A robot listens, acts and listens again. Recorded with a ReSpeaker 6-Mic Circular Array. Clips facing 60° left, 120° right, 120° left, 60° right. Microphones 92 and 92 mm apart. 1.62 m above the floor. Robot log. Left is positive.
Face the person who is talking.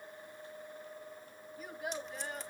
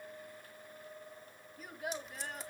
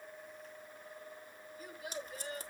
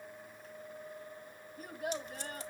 note: The child speaking: 30° right.
cmd yaw -30
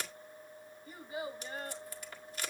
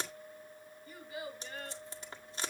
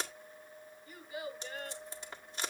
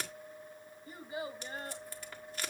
end: Facing the child speaking.